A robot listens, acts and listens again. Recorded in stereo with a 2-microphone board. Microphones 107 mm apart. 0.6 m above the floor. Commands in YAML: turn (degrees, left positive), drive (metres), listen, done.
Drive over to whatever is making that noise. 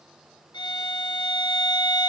turn: 45
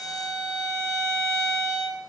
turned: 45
drive: 1.0
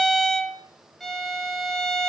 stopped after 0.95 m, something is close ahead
done: "Arrived at the violin, straight ahead."